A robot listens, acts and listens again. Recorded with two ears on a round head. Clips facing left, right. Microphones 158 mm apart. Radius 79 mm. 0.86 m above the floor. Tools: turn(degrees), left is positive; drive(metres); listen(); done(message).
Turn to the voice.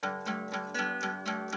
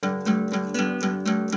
listen()
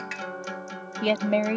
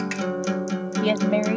turn(degrees=30)
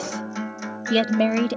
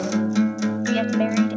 turn(degrees=130)
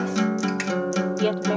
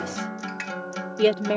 turn(degrees=-25)
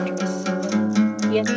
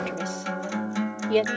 listen()
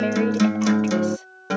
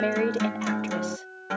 listen()
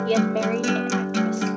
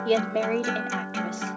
done("Found it: a woman speaking, straight ahead.")